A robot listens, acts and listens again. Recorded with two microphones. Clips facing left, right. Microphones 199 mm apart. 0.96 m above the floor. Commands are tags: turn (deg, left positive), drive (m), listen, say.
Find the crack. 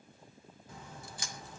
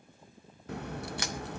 <turn deg="-70"/>
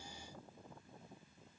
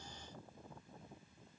<listen/>
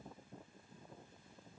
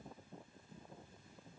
<say>I heard a crack, but can't make it out now. It was about straight ahead or 40° right.</say>